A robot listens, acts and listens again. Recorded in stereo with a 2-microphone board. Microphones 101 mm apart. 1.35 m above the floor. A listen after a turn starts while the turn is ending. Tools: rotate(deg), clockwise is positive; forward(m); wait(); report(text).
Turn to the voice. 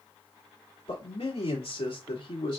rotate(-55)
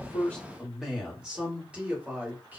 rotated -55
rotate(15)
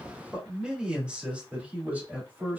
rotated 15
rotate(15)
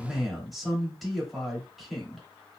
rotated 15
report("Found it: a man speaking, straight ahead.")